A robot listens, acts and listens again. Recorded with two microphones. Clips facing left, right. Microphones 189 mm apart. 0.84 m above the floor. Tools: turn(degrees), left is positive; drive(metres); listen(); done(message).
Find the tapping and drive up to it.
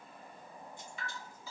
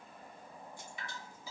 listen()
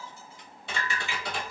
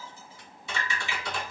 turn(degrees=65)
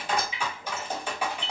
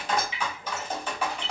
turn(degrees=10)
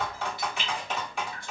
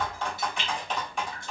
drive(metres=1.0)
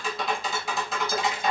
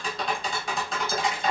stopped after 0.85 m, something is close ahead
done("Arrived at the tapping, straight ahead.")